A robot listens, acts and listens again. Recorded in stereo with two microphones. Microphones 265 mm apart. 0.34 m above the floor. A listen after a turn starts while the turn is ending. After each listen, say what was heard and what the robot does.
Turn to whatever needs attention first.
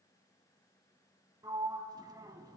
Keep listening.
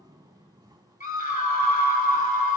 The scream: about 30° left or 150° left. Turn 30° left.
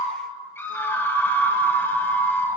So it is at 10° left. Turn 10° left.
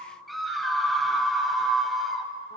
Found it: a scream, straight ahead.